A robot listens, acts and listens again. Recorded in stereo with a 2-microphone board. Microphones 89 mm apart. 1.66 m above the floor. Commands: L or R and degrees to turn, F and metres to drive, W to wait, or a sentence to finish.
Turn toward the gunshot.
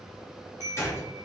L30
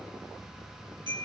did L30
W
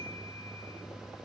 I heard a gunshot, but can't make it out now. It was about straight ahead or 120° left.